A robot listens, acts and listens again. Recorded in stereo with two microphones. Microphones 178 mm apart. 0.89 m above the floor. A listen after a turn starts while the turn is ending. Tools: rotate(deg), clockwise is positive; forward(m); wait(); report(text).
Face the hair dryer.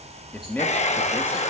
rotate(-40)
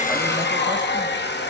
rotate(-105)
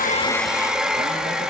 report("Facing the hair dryer, under 1 m away.")